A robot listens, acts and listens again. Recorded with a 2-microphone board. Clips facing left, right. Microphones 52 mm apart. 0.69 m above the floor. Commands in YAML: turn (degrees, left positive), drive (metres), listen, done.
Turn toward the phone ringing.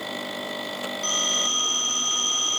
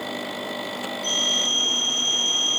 turn: 90
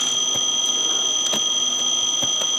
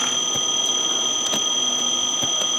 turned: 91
turn: -15
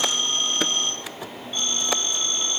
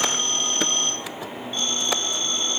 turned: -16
done: "Found it: a phone ringing, straight ahead, over 4 m away."